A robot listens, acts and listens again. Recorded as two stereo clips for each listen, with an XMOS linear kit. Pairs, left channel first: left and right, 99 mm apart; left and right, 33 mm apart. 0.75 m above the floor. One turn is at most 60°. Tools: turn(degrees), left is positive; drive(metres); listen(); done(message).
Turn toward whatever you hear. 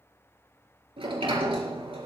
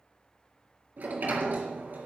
turn(degrees=-60)
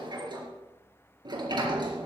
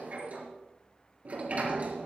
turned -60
turn(degrees=-50)
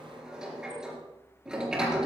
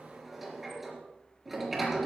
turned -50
turn(degrees=-10)
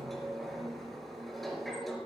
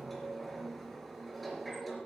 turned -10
done("Facing the sliding door, 2 to 4 m away.")